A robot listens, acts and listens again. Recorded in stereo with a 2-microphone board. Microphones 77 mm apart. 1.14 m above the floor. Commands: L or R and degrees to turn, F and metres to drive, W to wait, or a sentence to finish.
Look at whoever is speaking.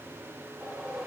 W
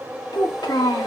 L90
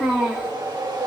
Found it: a child speaking, straight ahead.